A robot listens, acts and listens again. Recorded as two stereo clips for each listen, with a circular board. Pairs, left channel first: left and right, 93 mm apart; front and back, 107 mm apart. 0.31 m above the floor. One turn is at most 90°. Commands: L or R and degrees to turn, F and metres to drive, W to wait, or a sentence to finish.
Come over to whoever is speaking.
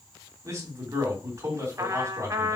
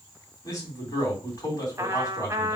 R45
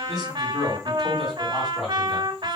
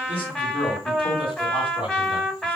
F1.0
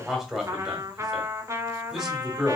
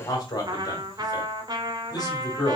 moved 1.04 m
F1.0
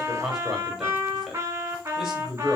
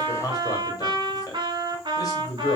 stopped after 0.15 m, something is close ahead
I am next to the man speaking.